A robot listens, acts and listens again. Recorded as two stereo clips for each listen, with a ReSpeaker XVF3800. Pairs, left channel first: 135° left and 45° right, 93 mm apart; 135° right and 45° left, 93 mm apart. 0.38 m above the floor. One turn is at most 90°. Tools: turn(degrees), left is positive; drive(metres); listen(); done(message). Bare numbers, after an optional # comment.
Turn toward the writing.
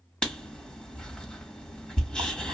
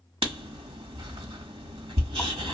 # The writing: 55° left.
turn(55)
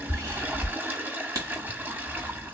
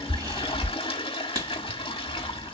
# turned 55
done("Found it: writing, straight ahead, 1 to 2 m away.")